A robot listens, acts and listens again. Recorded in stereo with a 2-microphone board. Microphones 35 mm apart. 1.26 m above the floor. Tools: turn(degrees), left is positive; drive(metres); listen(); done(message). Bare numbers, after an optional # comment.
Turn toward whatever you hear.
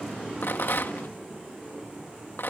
turn(90)
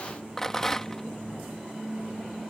# So it is at 10° left.
turn(10)
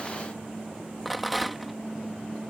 done("Facing the rattle.")